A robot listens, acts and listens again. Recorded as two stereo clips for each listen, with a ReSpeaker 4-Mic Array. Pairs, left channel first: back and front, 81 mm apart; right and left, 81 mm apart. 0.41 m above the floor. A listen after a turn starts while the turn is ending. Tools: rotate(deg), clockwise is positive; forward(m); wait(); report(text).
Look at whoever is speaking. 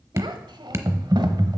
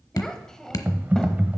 report("Facing the child speaking, 1 to 2 m away.")